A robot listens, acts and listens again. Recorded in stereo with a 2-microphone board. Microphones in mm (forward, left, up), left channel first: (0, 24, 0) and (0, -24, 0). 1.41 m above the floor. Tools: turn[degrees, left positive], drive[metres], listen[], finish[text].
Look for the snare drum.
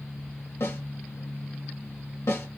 Thought: The snare drum: about 65° left or 115° left.
Action: turn[65]
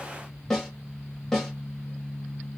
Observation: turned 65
Action: finish[Facing the snare drum.]